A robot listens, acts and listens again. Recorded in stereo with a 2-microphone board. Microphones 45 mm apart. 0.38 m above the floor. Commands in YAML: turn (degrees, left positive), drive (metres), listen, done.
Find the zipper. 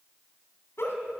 listen: true
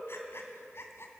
listen: true
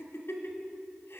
done: "I can't make out a zipper, only a giggle."